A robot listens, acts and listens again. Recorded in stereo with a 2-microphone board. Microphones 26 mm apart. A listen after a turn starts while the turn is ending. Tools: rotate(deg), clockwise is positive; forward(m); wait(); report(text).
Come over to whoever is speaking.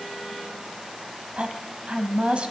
rotate(40)
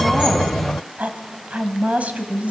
rotate(95)
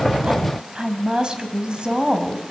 rotate(40)
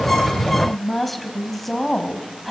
forward(1.0)
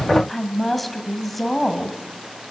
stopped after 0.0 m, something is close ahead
report("Blocked. The woman speaking is further on, straight ahead.")